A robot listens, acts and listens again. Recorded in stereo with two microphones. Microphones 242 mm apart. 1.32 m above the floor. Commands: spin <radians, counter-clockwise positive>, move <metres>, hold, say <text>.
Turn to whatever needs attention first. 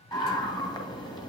spin 0.35
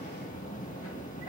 spin 2.53
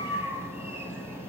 spin -0.17
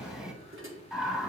say Found it: a scream, straight ahead.